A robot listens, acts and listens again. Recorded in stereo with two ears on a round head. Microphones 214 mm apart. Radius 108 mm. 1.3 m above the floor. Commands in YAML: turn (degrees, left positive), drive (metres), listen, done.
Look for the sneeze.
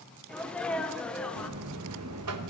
turn: 30
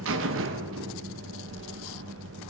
listen: true
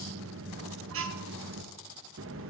done: "I heard a sneeze, but can't make it out now. It was about 25° right or 145° left."